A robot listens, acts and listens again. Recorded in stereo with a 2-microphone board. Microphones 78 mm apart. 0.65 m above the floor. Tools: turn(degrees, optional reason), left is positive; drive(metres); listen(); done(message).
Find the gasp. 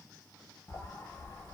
listen()
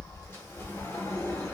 listen()
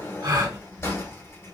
turn(degrees=-60, reason="The gasp: about 60° right or 120° right.")
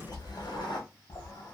listen()
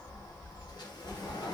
done("I heard a gasp, but can't make it out now. It was about straight ahead or 60° right.")